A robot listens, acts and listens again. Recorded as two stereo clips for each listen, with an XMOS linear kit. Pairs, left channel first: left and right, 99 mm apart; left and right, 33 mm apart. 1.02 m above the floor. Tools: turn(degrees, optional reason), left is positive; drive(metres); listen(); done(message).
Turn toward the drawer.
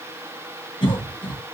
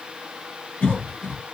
listen()
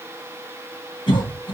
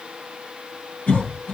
listen()
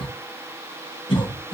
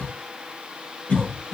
done("I can't make out a drawer, only a cough.")